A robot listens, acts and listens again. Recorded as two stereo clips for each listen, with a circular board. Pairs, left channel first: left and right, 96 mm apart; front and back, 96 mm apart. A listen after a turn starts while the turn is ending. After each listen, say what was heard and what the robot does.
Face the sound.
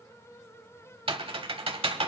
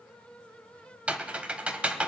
The typing on a keyboard: 105° right. Turn 105° right.
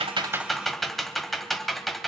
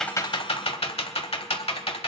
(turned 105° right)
Found it: typing on a keyboard, straight ahead, 1 to 2 m away.